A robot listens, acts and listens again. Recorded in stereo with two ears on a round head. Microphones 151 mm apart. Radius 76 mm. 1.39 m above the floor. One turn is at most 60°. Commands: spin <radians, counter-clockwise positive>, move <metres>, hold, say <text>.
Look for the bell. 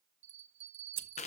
spin -0.79
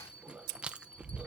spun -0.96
spin 0.17
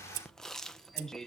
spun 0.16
hold
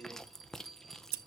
say Facing the bell.